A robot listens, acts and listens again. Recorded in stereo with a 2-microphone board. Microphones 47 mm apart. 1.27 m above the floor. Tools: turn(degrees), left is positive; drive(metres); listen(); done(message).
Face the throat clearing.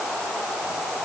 listen()
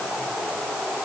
listen()
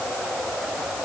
done("I can't make out throat clearing to turn to.")